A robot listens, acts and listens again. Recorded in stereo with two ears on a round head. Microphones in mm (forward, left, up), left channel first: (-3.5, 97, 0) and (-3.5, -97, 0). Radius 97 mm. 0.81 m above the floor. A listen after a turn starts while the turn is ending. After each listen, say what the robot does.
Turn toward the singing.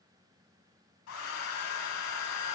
Keep listening.
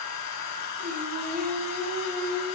Turn 90° right.
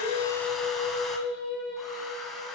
Found it: singing, straight ahead, 2 to 4 m away.